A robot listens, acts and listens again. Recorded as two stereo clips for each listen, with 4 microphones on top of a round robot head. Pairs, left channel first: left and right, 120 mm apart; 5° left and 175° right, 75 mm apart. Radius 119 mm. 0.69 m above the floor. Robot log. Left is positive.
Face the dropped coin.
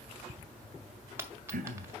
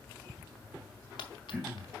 note: The dropped coin: 20° right.
cmd yaw -20
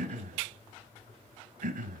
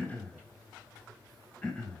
end: Facing where the dropped coin came from. I can't hear it now.